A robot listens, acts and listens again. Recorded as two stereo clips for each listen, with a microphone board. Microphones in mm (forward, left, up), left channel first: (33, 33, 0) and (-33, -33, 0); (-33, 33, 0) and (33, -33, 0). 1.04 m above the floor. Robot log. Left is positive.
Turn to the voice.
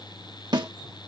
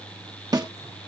cmd idle
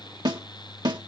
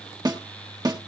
cmd idle
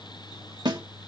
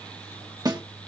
end: I can't make out anyone speaking, only a snare drum.